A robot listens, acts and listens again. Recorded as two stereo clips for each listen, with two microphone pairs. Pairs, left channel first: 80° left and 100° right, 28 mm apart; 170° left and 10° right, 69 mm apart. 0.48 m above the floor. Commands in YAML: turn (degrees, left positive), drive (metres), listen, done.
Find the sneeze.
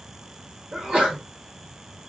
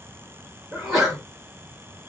turn: -95
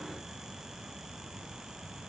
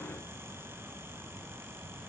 done: "I heard a sneeze from this way, but can't make it out now."